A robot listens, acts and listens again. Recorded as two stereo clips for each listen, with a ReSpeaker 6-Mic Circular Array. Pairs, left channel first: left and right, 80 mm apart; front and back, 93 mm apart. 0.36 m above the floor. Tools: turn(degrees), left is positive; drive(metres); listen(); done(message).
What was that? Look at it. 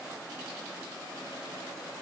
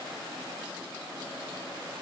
listen()
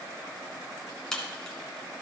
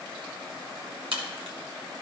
turn(degrees=170)
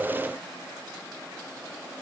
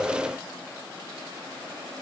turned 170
done("Facing where the crack came from. I can't hear it now.")